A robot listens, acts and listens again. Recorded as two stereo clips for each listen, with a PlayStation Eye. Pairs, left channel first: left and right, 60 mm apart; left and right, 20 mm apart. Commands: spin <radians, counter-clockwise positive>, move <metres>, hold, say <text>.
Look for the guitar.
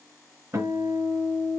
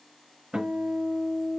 spin -0.79
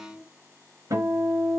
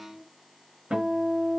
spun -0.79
spin -1.57
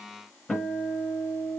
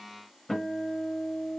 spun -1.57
say Facing the guitar.